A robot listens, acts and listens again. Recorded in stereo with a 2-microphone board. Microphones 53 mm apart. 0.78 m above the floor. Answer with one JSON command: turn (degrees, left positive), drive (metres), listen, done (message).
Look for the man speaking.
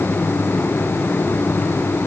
{"listen": true}
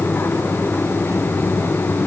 {"listen": true}
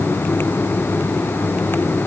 {"done": "I can't make out a man speaking."}